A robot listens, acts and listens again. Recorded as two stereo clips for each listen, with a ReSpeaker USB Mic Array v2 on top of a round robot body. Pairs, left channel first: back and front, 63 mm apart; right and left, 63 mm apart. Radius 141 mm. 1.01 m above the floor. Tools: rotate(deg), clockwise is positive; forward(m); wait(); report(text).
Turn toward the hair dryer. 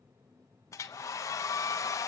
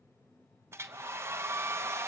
rotate(-140)
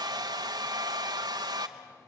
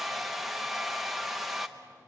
report("Facing the hair dryer, 1 to 2 m away.")